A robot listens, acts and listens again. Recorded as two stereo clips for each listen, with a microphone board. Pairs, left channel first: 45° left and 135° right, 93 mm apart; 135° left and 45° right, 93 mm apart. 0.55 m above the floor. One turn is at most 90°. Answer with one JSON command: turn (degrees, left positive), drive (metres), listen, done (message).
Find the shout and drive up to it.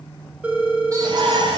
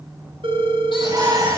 {"turn": -90}
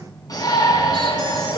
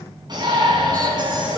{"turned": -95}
{"drive": 1.0}
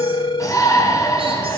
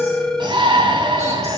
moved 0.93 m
{"turn": -10}
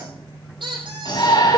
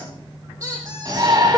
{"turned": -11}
{"drive": 1.0}
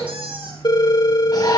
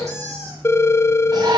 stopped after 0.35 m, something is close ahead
{"listen": true}
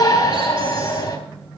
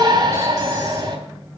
{"done": "Something is in my way. I am facing the shout but have not reached it."}